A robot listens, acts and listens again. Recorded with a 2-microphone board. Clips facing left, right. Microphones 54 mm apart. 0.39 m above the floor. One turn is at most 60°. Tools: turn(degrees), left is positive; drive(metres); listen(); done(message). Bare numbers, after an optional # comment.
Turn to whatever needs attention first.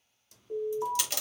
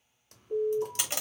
# The alarm: about 50° left or 130° left.
turn(50)
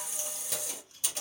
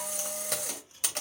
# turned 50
listen()
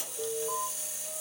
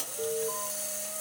done("Found it: an alarm, straight ahead.")